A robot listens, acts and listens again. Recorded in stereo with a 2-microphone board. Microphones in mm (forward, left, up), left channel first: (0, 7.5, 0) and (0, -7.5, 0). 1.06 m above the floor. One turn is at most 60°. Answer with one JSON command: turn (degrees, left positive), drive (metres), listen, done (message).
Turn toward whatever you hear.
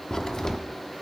{"turn": 40}
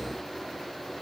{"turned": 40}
{"listen": true}
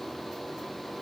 {"done": "I heard a crack, but can't make it out now. It was about straight ahead or 100° left."}